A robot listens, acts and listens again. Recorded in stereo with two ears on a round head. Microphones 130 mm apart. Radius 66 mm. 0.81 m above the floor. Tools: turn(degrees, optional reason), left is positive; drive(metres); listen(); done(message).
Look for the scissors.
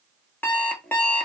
listen()
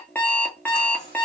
listen()
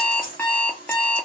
turn(degrees=65, reason="The scissors: about 65° left or 115° left.")
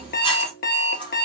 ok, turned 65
turn(degrees=35, reason="So it is at 35° left.")
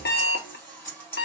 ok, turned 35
turn(degrees=15, reason="The scissors is now 15° left.")
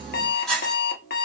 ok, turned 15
done("Found it: scissors, straight ahead, 2 to 4 m away.")